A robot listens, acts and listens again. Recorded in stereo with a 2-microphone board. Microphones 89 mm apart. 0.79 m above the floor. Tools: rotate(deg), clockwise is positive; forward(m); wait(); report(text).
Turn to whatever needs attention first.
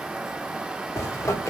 wait()
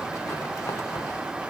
wait()
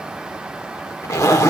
report("I can't make out anything urgent to turn to.")